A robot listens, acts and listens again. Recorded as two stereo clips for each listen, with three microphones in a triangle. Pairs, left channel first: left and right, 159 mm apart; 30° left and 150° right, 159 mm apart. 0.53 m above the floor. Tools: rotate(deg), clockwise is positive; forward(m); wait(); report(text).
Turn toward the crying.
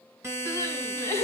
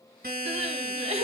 rotate(-160)
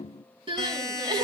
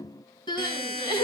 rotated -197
rotate(35)
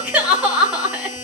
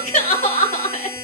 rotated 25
report("Found it: crying, straight ahead, 2 to 4 m away.")